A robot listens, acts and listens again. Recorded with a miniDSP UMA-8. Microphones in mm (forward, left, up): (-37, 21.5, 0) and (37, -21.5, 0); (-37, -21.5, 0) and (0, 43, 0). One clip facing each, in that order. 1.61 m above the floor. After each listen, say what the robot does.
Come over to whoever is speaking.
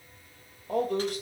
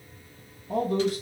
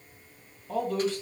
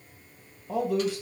Turn 140° left.
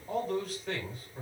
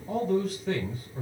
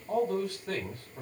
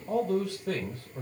Turn 60° left.
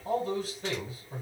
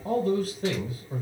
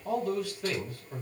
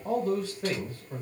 Turn 10° left.
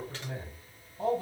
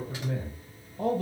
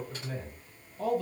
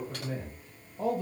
Drive 1.0 m forward.
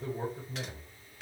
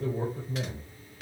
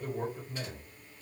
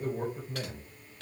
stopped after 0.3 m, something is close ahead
Something is in my way. I am facing the man speaking but have not reached it.